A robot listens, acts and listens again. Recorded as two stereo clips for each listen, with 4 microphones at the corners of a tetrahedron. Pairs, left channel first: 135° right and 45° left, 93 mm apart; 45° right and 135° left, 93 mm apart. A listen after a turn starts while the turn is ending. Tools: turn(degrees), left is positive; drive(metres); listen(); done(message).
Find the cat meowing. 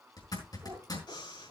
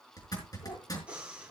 turn(degrees=-10)
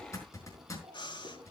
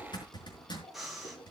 done("Found it: a cat meowing, straight ahead.")